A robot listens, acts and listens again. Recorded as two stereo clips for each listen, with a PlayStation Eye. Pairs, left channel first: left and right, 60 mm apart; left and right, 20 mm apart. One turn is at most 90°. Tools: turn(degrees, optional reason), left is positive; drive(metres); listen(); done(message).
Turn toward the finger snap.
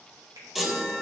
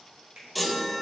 turn(degrees=-90)
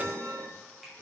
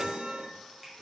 listen()
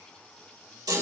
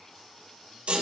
listen()
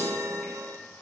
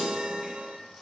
done("Facing where the finger snap came from. I can't hear it now.")